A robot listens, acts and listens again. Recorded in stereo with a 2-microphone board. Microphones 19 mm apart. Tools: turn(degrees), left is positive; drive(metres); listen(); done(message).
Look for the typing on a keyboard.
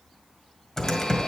turn(degrees=25)
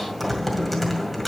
done("Found it: typing on a keyboard, straight ahead.")